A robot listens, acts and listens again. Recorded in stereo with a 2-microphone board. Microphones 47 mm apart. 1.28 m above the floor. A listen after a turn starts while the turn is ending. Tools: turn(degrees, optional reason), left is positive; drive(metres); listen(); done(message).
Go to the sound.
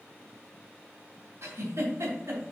turn(degrees=-70, reason="The giggle: about 70° right or 110° right.")
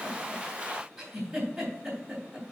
drive(metres=1.0)
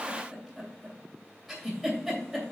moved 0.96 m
drive(metres=1.0)
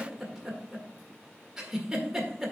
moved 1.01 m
turn(degrees=-10, reason="The giggle is now 10° right.")
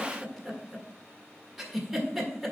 drive(metres=1.0)
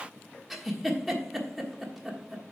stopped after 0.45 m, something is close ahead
done("Arrived at the giggle, straight ahead.")